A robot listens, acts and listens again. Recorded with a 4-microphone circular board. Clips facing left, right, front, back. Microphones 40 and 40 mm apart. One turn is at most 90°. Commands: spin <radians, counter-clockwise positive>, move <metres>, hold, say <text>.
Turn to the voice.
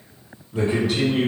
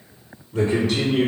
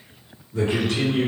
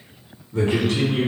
spin 1.57
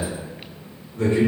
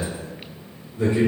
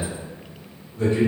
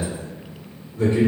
spin 1.57
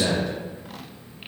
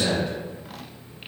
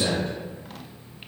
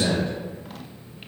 say Found it: a man speaking, straight ahead, 1 to 2 m away.